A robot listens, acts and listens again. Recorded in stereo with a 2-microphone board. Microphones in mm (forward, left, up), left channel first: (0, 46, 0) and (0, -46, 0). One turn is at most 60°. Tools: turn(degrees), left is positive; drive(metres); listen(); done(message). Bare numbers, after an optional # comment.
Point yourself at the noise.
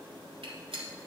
turn(-60)
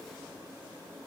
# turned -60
# Nothing new. It was at 30° right.
turn(-30)
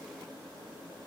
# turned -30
done("Facing where the gunshot came from. I can't hear it now.")